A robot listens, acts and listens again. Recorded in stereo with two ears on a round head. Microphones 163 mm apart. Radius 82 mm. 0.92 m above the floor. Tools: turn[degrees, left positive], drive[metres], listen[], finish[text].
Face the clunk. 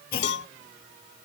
Thought: The clunk: about 55° left or 125° left.
Action: turn[55]
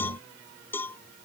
Action: listen[]
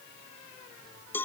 Action: finish[I heard a clunk, but can't make it out now. It was about straight ahead or 70° left.]